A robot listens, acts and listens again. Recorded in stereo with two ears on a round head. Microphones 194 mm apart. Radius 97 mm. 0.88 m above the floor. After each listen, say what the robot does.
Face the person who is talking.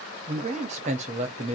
Turn 30° right.
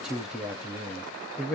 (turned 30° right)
Facing the man speaking.